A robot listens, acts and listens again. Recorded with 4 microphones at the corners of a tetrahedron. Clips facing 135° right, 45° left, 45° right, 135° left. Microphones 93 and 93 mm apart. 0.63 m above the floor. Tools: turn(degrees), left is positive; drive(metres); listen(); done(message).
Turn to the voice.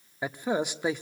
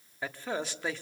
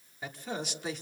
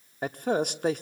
turn(degrees=155)
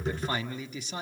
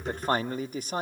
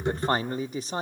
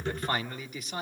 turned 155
done("Found it: a man speaking, straight ahead, 1 to 2 m away.")